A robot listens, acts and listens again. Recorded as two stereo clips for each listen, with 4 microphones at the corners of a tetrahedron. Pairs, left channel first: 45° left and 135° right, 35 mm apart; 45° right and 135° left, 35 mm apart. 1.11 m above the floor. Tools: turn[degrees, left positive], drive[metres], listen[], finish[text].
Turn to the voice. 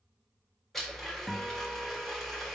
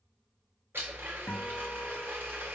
Action: listen[]
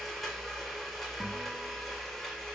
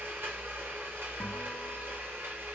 Action: listen[]
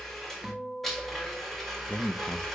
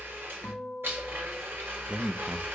Thought: The man speaking: 80° left.
Action: turn[80]
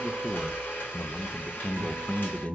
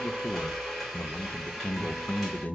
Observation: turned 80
Action: finish[Found it: a man speaking, straight ahead, under 1 m away.]